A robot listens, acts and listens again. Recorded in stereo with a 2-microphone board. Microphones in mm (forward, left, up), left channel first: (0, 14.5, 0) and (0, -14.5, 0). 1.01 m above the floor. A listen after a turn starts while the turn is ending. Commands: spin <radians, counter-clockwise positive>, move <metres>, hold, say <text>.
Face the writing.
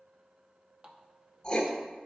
spin 0.52
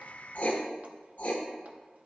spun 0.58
spin 2.01
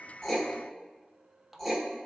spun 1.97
say Facing the writing, 1 to 2 m away.